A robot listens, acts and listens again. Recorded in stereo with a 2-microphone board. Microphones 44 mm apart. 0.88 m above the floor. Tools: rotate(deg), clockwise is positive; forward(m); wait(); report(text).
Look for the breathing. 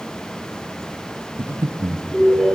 rotate(60)
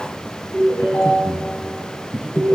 rotate(15)
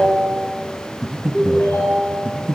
report("Found it: breathing, straight ahead, under 1 m away.")